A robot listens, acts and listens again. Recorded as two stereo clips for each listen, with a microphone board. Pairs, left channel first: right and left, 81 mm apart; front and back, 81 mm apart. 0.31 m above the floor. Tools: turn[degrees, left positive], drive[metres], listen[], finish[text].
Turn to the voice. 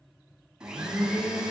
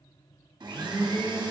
Action: listen[]
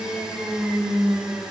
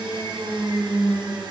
Action: listen[]
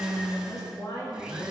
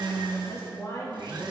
Thought: The woman speaking: 50° right.
Action: turn[-50]
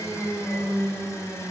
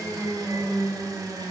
Action: listen[]
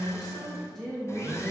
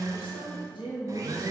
Action: finish[Found it: a woman speaking, straight ahead.]